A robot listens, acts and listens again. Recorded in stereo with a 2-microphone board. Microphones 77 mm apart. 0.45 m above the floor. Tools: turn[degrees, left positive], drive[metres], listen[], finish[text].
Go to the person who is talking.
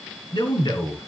Thought: The man speaking: about 70° left or 110° left.
Action: turn[70]
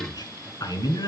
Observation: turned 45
Thought: So it is at 60° left.
Action: turn[60]
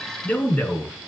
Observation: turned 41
Thought: The man speaking is now 20° left.
Action: turn[20]
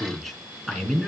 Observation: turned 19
Action: drive[1.0]
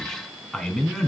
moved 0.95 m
Thought: The man speaking is now 10° left.
Action: turn[10]
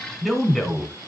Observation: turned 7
Action: drive[1.0]
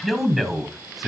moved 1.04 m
Action: drive[1.0]
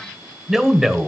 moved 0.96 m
Action: drive[1.0]
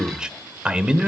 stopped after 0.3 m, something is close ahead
Thought: The man speaking is now 15° right.
Action: turn[-15]
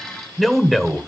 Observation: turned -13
Action: finish[Arrived at the man speaking, straight ahead.]